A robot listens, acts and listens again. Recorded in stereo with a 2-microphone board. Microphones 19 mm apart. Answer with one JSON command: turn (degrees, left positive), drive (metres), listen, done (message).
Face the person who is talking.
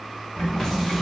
{"turn": -20}
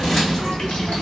{"turn": 10}
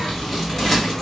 {"turn": 20}
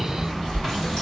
{"turn": 15}
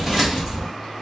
{"turn": 10}
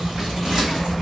{"turn": 15}
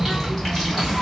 {"done": "Facing the child speaking."}